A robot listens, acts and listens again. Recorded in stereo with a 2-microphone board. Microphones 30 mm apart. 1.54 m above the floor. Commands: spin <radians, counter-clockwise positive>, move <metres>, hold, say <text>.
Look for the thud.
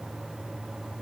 hold
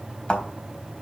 spin 0.61
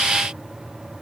hold
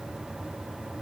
say I heard a thud, but can't make it out now. It was about straight ahead or 110° left.